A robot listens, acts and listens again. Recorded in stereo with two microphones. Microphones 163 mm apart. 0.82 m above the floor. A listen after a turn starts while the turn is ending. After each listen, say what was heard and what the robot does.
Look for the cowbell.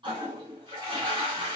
Keep listening.
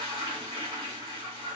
Keep listening.
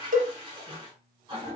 The cowbell: about 55° right or 125° right. Turn 55° right.
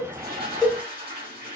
Facing the cowbell.